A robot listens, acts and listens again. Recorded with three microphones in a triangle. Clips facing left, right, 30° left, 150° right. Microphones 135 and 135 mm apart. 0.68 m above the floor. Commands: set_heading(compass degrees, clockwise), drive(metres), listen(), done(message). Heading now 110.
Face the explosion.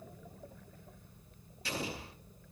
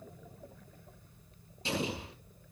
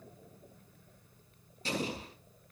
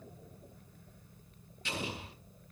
set_heading(135)
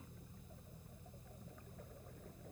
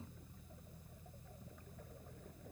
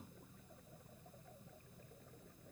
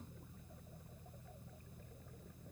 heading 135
done("Facing where the explosion came from. I can't hear it now.")